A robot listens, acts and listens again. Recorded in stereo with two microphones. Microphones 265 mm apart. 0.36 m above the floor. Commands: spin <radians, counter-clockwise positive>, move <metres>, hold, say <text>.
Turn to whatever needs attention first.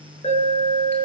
spin 0.35
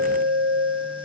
spin 2.36
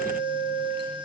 spin -0.26
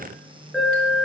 say Facing the alarm.